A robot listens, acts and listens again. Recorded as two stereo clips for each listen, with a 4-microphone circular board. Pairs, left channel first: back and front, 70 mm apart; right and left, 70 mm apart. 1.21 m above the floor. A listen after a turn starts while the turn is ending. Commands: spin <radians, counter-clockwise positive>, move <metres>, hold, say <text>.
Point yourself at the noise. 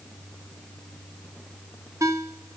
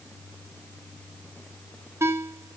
spin 0.70
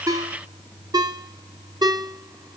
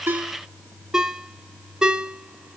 say Found it: a ringtone, straight ahead.